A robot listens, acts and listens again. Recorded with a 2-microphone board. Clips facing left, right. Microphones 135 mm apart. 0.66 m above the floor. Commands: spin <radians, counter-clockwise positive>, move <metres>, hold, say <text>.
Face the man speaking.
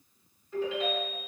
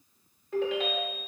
hold
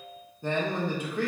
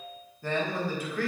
spin 0.35
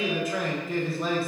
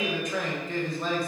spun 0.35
say Found it: a man speaking, straight ahead, under 1 m away.